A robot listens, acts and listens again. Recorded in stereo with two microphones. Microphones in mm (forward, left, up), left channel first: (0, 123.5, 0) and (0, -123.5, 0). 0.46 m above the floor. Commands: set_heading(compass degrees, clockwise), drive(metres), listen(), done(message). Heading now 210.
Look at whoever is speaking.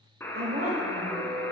set_heading(250)
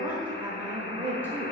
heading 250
set_heading(260)
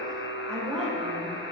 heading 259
done("Found it: a woman speaking, straight ahead.")